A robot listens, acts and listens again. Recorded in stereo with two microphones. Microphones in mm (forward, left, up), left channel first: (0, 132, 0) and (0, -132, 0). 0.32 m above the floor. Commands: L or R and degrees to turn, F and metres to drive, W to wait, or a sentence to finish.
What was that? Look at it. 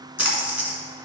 L75
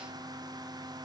W
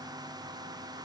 I heard a splash, but can't make it out now. It was about straight ahead or 30° left.